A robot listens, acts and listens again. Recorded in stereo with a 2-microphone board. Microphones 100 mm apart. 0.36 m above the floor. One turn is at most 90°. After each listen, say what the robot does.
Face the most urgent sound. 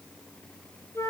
Keep listening.
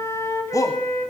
Turn 35° left.
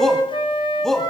Found it: a shout, straight ahead.